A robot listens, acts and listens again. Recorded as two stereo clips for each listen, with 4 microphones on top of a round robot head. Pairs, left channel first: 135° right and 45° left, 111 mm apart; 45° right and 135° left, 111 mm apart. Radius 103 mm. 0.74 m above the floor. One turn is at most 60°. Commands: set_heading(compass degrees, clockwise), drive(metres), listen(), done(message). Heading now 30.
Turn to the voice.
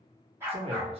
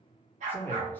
set_heading(5)
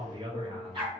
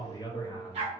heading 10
done("Found it: a man speaking, straight ahead, 1 to 2 m away.")